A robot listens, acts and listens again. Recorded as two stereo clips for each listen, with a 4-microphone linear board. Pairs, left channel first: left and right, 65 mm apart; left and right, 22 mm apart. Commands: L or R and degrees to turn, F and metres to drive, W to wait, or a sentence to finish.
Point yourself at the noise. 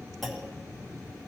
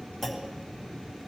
L30
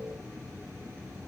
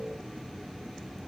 W
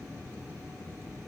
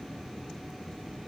I heard a clunk, but can't make it out now. It was about 30° right or 150° left.